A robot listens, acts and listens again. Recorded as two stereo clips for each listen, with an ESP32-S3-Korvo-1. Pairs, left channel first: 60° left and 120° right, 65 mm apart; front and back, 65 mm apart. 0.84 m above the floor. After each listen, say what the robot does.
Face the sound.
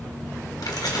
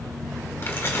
Turn 50° left.
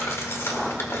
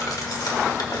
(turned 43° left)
Turn 10° left.
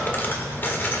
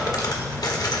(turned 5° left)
Facing the keys jangling, 1 to 2 m away.